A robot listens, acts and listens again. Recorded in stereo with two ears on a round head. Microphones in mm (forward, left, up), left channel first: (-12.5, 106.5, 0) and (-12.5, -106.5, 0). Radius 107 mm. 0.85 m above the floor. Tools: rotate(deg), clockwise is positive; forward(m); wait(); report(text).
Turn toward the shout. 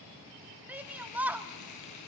rotate(30)
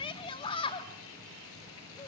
rotate(-25)
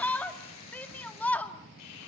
rotate(-10)
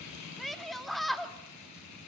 report("Found it: a shout, straight ahead.")